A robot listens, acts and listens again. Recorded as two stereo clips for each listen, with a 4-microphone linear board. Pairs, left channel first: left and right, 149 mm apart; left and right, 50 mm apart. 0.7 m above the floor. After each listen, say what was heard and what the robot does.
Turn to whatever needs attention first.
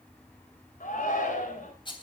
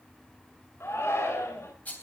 The shout: about 65° left or 115° left. Turn 65° left.
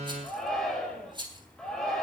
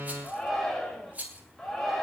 Facing the shout.